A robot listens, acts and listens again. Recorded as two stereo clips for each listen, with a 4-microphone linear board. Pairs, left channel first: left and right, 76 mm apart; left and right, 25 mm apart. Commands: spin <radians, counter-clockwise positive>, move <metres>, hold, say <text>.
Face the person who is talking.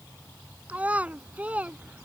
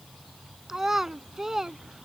spin -0.35
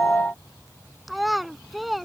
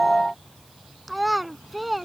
say Facing the child speaking.